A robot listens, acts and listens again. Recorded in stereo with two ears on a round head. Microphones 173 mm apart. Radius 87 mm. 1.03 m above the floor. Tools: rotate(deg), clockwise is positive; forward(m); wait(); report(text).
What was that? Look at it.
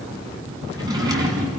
rotate(20)
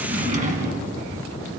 rotate(135)
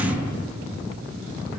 rotate(10)
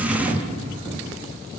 report("Facing the drawer, 2 to 4 m away.")